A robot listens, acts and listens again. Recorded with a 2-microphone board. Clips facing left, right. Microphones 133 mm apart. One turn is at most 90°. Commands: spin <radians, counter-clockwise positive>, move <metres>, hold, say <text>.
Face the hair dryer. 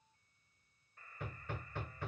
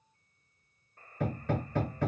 hold
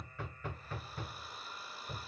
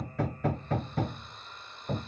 spin 0.52
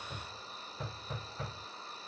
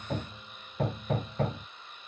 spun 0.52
spin 1.57
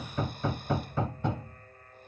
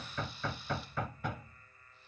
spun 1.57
spin 0.96
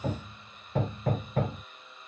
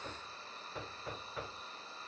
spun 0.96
spin -0.52
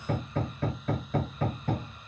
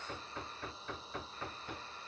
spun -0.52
hold
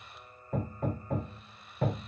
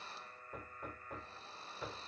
spin -0.52
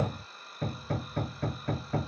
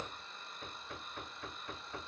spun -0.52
say Facing the hair dryer.